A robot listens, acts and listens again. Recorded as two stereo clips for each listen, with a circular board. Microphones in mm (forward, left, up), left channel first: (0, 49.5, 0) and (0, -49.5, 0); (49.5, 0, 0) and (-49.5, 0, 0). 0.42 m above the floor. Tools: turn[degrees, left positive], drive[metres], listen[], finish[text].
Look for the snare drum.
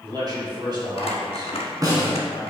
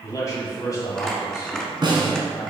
Thought: The snare drum: 140° right.
Action: turn[-140]
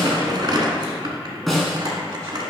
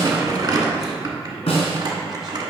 Action: finish[Facing the snare drum, 1 to 2 m away.]